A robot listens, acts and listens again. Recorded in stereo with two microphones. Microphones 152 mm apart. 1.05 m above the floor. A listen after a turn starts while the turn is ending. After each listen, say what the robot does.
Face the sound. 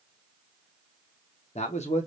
Turn 45° left.
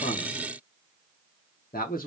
Turn 85° left.
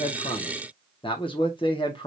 Turn 35° left.
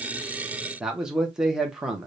Facing the man speaking, under 1 m away.